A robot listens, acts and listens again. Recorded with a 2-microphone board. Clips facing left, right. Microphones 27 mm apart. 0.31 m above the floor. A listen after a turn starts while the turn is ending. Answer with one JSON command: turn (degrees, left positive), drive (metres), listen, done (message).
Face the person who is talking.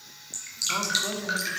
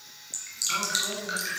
{"turn": 25}
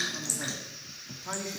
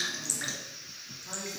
{"turn": 125}
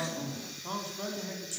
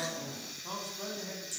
{"turn": 15}
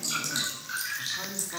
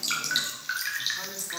{"done": "Facing the man speaking."}